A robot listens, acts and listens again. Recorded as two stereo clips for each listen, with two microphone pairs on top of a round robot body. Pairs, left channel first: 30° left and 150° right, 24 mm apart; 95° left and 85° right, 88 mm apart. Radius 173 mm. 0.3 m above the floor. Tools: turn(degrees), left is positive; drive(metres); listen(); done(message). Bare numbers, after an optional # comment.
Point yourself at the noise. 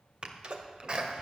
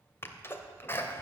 # The sneeze: 160° left.
turn(160)
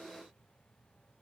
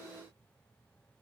done("I heard a sneeze from this way, but can't make it out now.")